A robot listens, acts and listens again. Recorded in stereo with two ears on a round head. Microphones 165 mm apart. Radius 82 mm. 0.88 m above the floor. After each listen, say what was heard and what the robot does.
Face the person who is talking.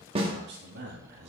The man speaking: about 60° right or 120° right. Turn 60° right.
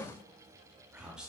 Found it: a man speaking, straight ahead.